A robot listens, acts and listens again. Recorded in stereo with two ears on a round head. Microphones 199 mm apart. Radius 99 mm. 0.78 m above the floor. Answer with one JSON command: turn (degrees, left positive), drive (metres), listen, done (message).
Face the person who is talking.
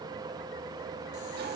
{"listen": true}
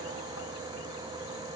{"listen": true}
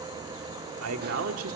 {"turn": -70}
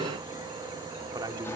{"turn": -20}
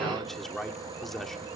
{"done": "Found it: a man speaking, straight ahead, 2 to 4 m away."}